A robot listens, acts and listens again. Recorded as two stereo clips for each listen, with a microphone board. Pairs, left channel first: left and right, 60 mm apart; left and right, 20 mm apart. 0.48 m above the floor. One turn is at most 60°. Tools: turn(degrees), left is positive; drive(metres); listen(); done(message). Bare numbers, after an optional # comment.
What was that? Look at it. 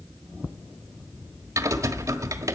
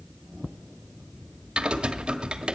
# The typing on a keyboard: about 65° right or 115° right.
turn(-60)
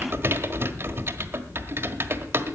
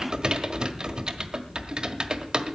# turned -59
# So it is at 45° right.
turn(-45)
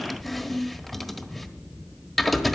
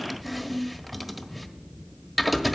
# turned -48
done("Facing the typing on a keyboard, 1 to 2 m away.")